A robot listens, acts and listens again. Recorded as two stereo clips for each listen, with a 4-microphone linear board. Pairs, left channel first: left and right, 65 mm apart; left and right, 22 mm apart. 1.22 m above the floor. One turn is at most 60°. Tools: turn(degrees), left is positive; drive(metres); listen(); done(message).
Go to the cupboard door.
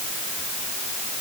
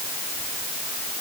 listen()
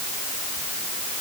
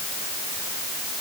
listen()
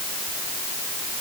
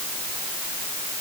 done("I can't make out a cupboard door to turn to.")